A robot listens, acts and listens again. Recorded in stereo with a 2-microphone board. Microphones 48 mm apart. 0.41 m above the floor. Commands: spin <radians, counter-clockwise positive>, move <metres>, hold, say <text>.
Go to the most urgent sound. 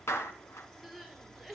spin 0.52
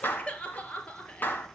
spin 2.71
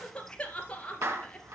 spin 0.35
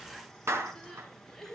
move 1.0
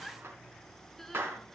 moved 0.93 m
move 1.0
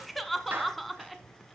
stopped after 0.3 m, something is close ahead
say Arrived at the crying, straight ahead.